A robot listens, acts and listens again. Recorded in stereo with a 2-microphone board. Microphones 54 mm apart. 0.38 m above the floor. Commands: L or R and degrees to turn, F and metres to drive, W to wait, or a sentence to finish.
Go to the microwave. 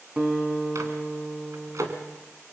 R90
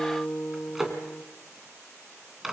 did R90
F1.0
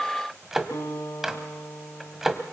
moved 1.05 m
F1.0
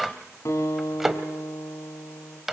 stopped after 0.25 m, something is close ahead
Arrived at the microwave, straight ahead.